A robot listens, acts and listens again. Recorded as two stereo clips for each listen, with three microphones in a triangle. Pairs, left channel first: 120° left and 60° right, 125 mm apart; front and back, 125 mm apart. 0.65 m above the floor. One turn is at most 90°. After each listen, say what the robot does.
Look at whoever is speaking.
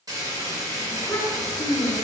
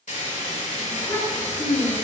Turn 55° left.
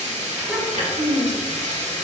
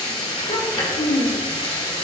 Turn 15° left.
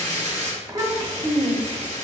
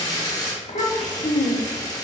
Facing the child speaking, 1 to 2 m away.